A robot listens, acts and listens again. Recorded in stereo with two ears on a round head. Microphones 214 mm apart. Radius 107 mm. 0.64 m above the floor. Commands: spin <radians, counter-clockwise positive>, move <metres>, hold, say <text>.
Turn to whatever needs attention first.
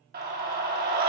spin -0.70
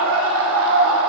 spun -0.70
spin -1.66
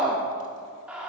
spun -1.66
say Found it: a scream, straight ahead, under 1 m away.